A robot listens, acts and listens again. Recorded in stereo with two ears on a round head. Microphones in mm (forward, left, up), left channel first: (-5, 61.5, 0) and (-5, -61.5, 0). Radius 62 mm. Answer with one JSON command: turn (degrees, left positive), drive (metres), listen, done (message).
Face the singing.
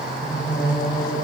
{"turn": 25}
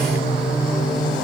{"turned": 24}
{"done": "Facing the singing, over 4 m away."}